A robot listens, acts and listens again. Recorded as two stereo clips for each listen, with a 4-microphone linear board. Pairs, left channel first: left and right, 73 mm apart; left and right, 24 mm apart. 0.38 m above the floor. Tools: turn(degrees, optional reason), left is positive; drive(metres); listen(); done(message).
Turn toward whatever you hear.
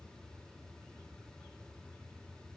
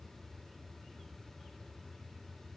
listen()
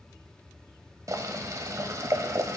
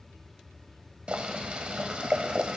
turn(degrees=-50, reason="The boiling: about 50° right or 130° right.")
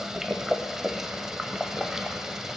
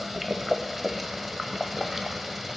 turn(degrees=-10, reason="So it is at 10° right.")
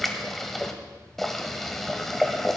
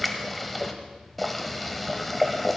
done("Found it: boiling, straight ahead, 1 to 2 m away.")